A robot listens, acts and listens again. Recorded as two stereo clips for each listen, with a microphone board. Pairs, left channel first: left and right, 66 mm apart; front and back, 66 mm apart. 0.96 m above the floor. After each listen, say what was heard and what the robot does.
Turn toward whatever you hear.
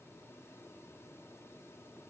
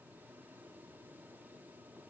Keep listening.
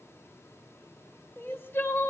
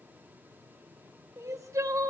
The crying: 145° left. Turn 145° left.
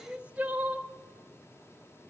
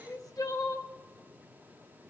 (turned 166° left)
The crying is now 20° right. Turn 20° right.
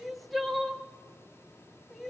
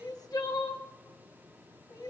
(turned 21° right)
Found it: crying, straight ahead, 1 to 2 m away.